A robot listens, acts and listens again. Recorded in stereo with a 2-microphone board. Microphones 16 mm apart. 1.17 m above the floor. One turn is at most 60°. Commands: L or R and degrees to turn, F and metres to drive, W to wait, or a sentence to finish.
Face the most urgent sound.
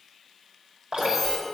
R30
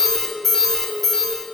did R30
L20
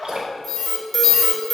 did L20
Found it: an alarm, straight ahead, 2 to 4 m away.